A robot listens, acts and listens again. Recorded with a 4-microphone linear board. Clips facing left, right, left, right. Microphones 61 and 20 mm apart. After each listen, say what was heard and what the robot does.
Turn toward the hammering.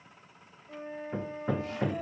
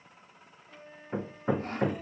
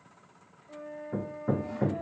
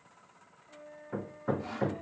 The hammering: about 20° right or 160° right. Turn 20° right.
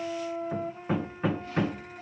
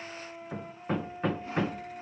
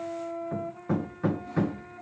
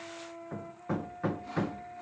Facing the hammering, under 1 m away.